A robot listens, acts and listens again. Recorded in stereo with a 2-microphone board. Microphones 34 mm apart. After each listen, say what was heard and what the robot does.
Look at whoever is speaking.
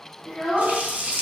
Turn 30° left.
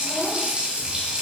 Keep listening.
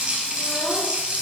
Keep listening.
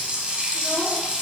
I heard a child speaking, but can't make it out now. It was about 30° right or 150° left.